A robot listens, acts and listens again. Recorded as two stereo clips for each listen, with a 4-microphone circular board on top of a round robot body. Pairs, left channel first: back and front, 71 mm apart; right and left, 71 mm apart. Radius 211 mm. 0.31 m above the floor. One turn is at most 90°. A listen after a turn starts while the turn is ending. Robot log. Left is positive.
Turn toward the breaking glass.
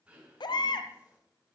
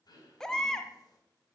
cmd idle
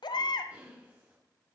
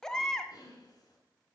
cmd idle
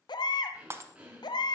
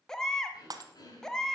note: The breaking glass: 55° left.
cmd yaw +55
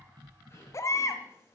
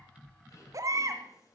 end: I heard breaking glass from this way, but can't make it out now.